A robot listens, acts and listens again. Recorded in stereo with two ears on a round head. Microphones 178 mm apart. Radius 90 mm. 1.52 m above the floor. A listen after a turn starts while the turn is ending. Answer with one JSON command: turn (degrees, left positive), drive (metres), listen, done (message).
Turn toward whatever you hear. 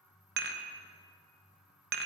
{"turn": -50}
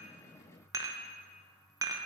{"turn": -20}
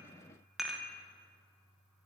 {"done": "Facing the dishes clattering."}